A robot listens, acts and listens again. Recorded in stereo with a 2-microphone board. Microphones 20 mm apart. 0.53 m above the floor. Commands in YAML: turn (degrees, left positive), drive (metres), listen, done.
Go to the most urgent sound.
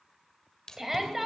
turn: -20
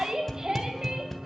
turn: -140
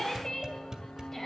turn: 20
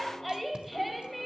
drive: 1.0
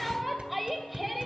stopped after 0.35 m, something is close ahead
done: "Something is in my way. I am facing the shout but have not reached it."